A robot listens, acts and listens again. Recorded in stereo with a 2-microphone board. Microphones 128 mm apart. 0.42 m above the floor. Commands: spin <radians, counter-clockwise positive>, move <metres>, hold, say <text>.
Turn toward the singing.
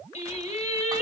spin 1.13
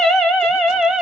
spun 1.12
say Found it: singing, straight ahead.